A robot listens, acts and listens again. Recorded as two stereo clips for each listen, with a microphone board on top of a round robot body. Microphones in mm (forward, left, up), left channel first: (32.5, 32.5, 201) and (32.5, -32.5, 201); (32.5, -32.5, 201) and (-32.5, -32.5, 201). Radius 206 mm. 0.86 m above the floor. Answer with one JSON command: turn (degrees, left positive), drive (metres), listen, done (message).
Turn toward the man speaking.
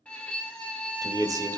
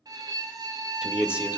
{"turn": -110}
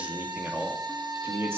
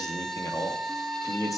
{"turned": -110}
{"turn": -35}
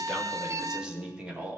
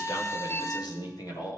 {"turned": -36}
{"turn": -20}
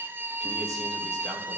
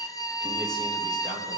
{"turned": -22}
{"listen": true}
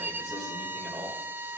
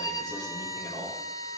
{"listen": true}
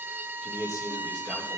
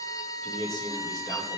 {"done": "Facing the man speaking."}